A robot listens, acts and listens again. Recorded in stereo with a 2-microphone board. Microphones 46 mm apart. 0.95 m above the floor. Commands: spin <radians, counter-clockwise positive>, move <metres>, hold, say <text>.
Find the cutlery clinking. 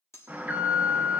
spin 1.31
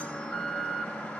hold
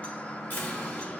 hold
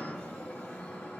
say I heard cutlery clinking, but can't make it out now. It was about straight ahead or 30° left.